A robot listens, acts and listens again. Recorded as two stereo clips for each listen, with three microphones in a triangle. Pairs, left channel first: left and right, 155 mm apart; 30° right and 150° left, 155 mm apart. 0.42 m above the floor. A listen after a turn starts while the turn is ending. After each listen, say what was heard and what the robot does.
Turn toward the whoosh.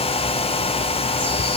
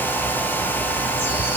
Keep listening.
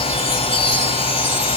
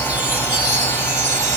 Keep listening.
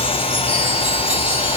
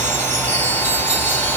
I can't make out a whoosh to turn to.